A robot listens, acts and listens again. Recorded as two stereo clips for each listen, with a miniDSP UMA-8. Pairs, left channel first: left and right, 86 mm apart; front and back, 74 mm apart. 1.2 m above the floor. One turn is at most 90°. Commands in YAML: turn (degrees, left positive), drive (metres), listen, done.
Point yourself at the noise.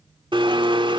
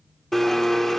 turn: -85
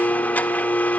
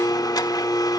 turn: 20
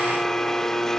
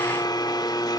done: "Found it: a blender, straight ahead."